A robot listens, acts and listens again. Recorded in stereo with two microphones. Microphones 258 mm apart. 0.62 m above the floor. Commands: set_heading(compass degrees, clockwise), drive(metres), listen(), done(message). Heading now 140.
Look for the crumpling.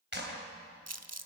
set_heading(230)
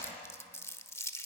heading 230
set_heading(220)
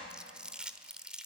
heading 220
done("Facing the crumpling.")